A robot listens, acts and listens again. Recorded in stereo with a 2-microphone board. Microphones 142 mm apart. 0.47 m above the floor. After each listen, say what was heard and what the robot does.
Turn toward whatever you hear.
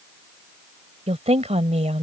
The woman speaking: about 50° right or 130° right. Turn 50° right.
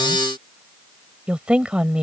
So it is at 10° right. Turn 10° right.
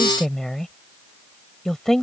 Found it: a woman speaking, straight ahead.